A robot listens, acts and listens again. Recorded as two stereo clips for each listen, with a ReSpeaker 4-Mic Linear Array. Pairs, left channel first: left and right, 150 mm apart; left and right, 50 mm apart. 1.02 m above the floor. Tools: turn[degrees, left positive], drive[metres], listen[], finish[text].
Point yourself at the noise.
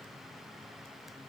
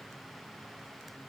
Action: listen[]
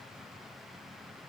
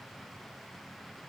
Action: listen[]
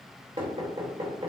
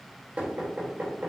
Thought: The knocking: about 35° right or 145° right.
Action: turn[-35]
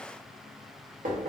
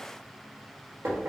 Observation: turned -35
Thought: So it is at 110° right.
Action: turn[-110]
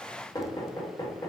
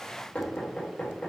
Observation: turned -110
Thought: The knocking is now 30° left.
Action: turn[30]
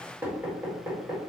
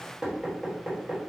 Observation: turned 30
Thought: The knocking is now 15° right.
Action: turn[-15]
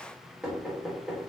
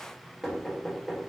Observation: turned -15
Action: finish[Found it: knocking, straight ahead, 1 to 2 m away.]